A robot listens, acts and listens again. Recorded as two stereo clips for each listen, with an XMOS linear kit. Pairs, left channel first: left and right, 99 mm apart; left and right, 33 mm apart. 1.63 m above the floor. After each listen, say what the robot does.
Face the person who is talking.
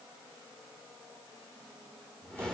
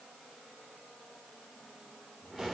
Keep listening.
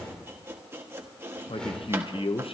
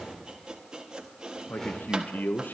Turn 70° left.
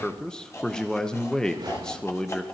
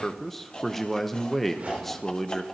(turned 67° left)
Turn 10° left.
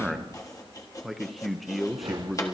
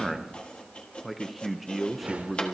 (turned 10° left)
Found it: a man speaking, straight ahead.